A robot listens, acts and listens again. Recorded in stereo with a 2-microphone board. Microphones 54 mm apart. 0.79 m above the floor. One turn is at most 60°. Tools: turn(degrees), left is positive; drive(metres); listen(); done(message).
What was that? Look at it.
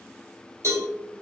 turn(degrees=-60)
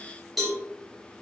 done("Facing the cowbell.")